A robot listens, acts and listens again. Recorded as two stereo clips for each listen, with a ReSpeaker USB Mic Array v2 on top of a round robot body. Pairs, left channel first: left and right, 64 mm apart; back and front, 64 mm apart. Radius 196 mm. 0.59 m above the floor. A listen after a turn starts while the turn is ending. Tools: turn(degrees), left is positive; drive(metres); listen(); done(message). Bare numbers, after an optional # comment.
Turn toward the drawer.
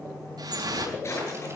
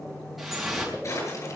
# The drawer: 135° left.
turn(135)
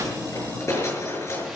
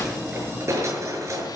# The drawer is now 45° left.
turn(45)
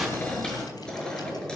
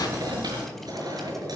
listen()
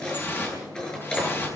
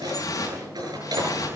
# The drawer is now 10° left.
turn(10)
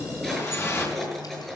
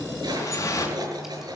done("Found it: a drawer, straight ahead.")